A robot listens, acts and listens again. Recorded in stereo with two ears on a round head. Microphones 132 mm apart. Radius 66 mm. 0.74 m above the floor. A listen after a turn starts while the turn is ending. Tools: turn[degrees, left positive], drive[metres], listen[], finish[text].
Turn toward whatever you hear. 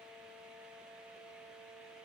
Action: listen[]
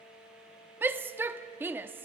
Action: turn[-30]
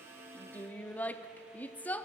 Thought: So it is at 15° left.
Action: turn[15]
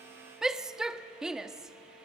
Action: finish[Facing the shout.]